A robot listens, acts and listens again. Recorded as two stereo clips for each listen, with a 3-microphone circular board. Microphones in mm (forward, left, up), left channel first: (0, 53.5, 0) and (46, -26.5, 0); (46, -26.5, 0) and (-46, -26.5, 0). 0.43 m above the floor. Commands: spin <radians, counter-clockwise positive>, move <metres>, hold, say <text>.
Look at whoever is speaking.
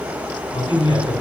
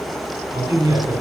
spin 2.53
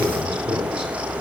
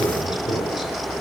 spin 0.44
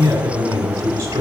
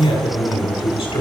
say Found it: a man speaking, straight ahead, 2 to 4 m away.